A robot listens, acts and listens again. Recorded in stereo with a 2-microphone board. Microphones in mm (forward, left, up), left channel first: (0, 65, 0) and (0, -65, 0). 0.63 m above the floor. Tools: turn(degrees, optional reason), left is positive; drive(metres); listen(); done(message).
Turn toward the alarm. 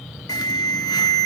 turn(degrees=30, reason="The alarm: about 30° left or 150° left.")
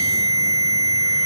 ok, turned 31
turn(degrees=115, reason="So it is at 115° left.")
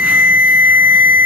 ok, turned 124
turn(degrees=-10, reason="The alarm is now 10° right.")
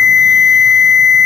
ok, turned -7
done("Found it: an alarm, straight ahead.")